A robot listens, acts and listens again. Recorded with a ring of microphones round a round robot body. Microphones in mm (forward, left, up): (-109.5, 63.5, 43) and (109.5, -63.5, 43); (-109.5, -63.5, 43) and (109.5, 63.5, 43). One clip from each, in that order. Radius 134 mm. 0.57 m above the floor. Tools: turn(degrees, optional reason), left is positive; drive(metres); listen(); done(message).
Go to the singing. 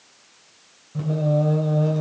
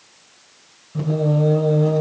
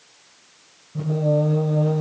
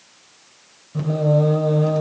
turn(degrees=55, reason="The singing: 55° left.")
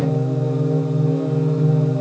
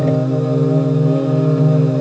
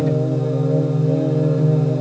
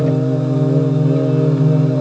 drive(metres=1.0)
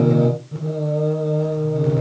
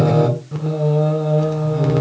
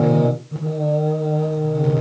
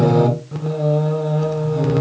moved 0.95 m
drive(metres=1.0)
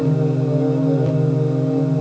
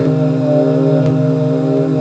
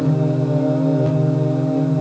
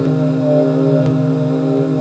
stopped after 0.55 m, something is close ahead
done("I am next to the singing.")